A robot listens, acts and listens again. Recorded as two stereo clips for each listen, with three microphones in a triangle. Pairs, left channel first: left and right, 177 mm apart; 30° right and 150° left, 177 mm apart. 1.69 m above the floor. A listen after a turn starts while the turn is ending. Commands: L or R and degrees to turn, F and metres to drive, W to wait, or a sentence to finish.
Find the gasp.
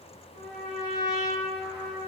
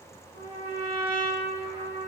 W
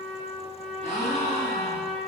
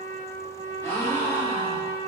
L50
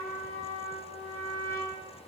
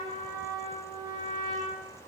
Facing where the gasp came from. I can't hear it now.